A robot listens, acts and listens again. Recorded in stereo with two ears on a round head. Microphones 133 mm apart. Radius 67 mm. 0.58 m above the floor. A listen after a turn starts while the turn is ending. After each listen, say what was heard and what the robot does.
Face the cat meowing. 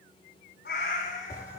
The cat meowing: about 70° left or 110° left. Turn 70° left.
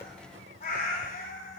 So it is at 60° left. Turn 60° left.
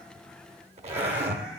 Keep listening.
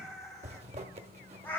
The cat meowing is now 15° left. Turn 15° left.
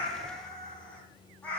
The cat meowing is now 10° left. Turn 10° left.
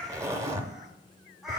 Facing the cat meowing.